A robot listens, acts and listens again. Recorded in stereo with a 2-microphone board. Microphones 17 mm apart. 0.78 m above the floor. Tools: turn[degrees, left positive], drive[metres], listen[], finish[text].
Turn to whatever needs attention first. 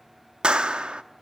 Action: listen[]
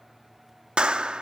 Action: listen[]
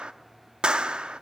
Action: finish[I can't make out anything urgent to turn to.]